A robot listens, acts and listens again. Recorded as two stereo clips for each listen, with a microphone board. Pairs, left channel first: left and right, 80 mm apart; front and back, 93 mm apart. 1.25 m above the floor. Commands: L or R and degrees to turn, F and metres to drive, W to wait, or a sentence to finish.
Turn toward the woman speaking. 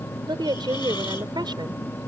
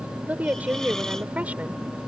R105
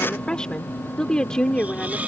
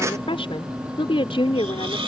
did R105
L10
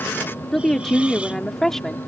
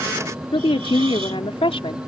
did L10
Facing the woman speaking.